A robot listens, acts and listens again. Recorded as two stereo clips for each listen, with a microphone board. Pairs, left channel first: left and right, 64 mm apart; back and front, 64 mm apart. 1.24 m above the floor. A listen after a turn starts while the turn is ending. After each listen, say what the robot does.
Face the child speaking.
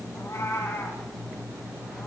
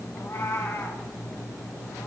Keep listening.
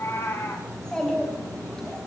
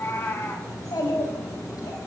Turn 170° left.
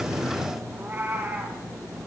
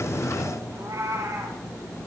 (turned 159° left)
Turn 10° left.
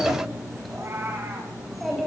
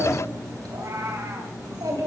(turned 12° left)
Facing the child speaking.